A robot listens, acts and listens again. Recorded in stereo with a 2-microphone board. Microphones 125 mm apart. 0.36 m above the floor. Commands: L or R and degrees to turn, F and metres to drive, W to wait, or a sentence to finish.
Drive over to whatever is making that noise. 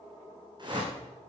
R40
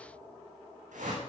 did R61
R85
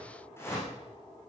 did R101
L20
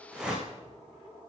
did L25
F1.0
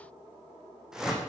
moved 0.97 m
F1.0
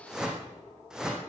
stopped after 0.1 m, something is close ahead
Blocked. The whoosh is further on, straight ahead.